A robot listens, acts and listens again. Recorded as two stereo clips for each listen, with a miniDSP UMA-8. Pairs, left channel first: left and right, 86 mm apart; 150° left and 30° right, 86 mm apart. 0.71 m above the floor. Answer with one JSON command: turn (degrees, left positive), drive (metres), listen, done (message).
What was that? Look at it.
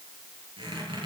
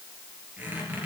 {"turn": -100}
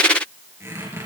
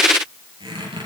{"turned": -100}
{"turn": -35}
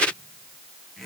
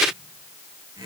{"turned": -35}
{"done": "Facing the squeak, over 4 m away."}